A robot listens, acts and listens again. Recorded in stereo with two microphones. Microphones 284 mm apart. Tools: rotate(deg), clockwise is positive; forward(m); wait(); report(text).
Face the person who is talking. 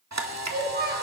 rotate(35)
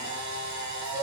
wait()
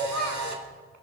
rotate(110)
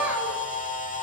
wait()
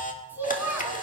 report("Found it: a child speaking, straight ahead, over 4 m away.")